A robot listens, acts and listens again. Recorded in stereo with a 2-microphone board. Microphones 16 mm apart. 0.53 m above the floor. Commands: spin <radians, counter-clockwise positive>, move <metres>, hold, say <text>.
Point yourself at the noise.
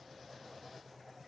hold
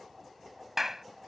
spin -0.35
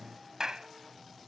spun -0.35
spin -2.44
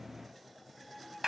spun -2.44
spin -0.52
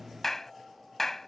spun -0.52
spin 0.35
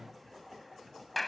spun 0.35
say Found it: a clap, straight ahead.